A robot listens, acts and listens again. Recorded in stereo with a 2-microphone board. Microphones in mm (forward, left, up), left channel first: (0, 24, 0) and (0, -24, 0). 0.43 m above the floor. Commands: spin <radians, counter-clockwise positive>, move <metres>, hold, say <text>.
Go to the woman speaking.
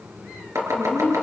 spin 0.96
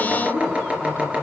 spin 0.96
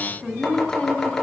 spin 0.35
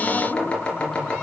hold
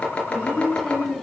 move 1.0
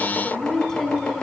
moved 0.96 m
spin 0.17
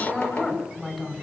move 1.0
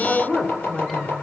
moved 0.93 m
move 1.0
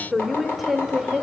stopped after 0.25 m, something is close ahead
say I am next to the woman speaking.